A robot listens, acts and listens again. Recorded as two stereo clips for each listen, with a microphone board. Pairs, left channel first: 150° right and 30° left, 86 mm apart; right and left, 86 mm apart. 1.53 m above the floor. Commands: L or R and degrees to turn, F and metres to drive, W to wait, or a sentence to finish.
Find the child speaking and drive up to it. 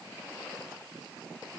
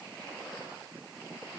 W
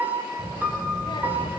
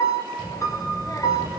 R130
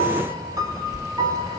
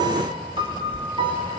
R20
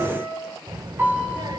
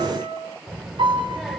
F1.0
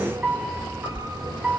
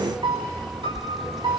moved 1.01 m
F1.0
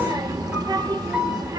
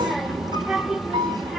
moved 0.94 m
F1.0
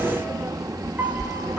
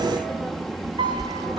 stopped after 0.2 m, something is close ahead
Arrived at the child speaking, straight ahead.